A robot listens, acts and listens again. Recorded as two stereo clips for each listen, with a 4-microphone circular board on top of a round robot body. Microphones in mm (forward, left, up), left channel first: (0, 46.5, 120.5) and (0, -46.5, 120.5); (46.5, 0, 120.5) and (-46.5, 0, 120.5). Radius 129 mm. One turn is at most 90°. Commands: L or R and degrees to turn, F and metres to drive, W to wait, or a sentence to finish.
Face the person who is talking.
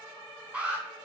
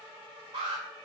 W
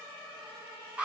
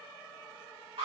W
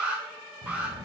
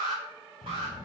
R50
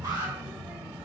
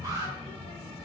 R20
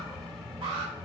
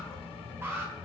Facing the child speaking, 2 to 4 m away.